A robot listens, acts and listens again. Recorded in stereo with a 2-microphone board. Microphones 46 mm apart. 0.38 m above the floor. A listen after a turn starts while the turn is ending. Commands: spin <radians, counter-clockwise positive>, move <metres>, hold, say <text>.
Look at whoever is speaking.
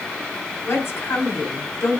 spin 1.13
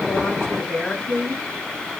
spin 0.35
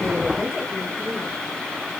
hold
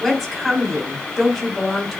say Facing the woman speaking.